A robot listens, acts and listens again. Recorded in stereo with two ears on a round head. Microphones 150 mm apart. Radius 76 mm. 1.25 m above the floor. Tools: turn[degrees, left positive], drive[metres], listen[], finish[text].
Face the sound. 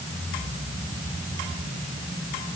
Action: listen[]
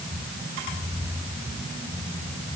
Action: listen[]
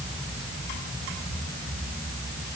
Action: finish[I can't make out anything.]